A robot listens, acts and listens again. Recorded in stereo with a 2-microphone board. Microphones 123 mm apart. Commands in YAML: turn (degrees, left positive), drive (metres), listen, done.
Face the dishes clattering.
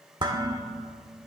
turn: -40
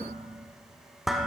done: "Found it: dishes clattering, straight ahead."